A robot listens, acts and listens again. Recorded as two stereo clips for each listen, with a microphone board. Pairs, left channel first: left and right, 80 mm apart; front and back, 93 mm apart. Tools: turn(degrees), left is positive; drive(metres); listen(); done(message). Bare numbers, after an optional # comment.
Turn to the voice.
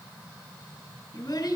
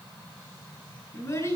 # The child speaking: 60° left.
turn(60)
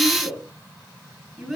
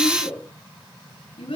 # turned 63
done("Found it: a child speaking, straight ahead.")